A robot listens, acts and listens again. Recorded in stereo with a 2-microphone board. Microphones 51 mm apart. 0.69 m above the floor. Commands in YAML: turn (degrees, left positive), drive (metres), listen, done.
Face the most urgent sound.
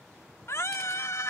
turn: 65
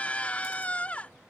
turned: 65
turn: 30
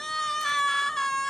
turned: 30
turn: 10
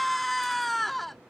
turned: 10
done: "Facing the scream."